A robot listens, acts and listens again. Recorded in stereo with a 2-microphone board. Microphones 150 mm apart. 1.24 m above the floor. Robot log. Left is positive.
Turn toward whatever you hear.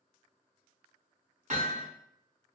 note: The hammering: about 55° right or 125° right.
cmd yaw -55
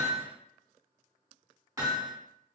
note: So it is at 25° right.
cmd yaw -25
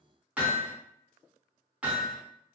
note: The hammering is now 10° right.
cmd yaw -10
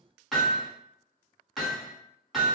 end: Found it: hammering, straight ahead.